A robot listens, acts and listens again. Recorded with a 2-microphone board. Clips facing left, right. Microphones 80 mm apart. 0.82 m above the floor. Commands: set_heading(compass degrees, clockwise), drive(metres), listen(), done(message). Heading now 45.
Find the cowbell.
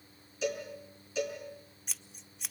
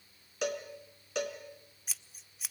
set_heading(110)
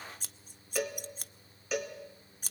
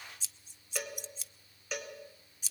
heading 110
done("Found it: a cowbell, straight ahead.")